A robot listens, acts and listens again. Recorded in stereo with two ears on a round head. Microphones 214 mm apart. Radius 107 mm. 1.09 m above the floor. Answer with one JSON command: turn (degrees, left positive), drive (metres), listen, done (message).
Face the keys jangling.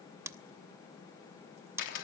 {"listen": true}
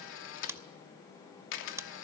{"listen": true}
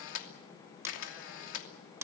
{"done": "I can't make out keys jangling to turn to."}